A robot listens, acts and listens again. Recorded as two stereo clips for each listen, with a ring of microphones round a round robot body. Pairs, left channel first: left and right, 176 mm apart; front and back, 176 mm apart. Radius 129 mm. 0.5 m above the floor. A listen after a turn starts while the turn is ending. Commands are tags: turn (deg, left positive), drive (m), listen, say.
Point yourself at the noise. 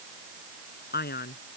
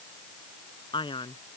<turn deg="60"/>
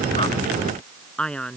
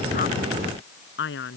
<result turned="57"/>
<say>Found it: a man speaking, straight ahead.</say>